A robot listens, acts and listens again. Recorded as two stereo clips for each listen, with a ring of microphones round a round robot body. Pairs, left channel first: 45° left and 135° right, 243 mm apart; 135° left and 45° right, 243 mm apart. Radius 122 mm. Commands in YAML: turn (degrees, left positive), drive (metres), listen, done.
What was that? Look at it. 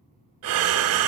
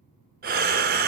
turn: -100
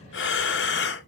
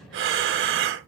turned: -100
done: "Facing the breathing."